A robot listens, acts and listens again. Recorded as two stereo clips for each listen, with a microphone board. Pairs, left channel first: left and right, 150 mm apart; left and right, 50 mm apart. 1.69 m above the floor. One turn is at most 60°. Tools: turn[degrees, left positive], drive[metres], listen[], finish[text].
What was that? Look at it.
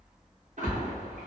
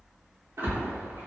Thought: The splash: about 55° right or 125° right.
Action: turn[-55]
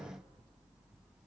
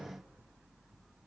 Action: listen[]
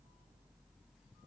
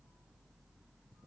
Action: finish[I heard a splash, but can't make it out now. It was about straight ahead or 70° right.]